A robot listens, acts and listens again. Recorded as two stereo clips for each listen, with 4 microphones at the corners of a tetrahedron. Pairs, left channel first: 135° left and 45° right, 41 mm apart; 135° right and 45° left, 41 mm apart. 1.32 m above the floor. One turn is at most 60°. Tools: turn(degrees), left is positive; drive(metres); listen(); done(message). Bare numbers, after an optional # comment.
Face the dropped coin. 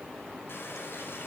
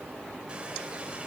listen()
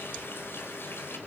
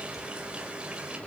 listen()
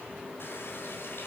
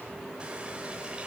done("I can't make out a dropped coin, only a running tap.")